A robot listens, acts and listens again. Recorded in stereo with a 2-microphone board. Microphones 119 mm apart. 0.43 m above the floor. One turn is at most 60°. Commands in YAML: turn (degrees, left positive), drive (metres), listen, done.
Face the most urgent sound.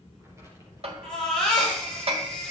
turn: 30
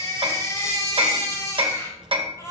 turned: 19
turn: 60
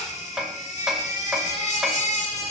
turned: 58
turn: 60
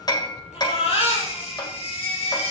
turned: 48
turn: 50
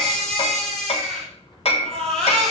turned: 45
done: "Facing the baby crying, over 4 m away."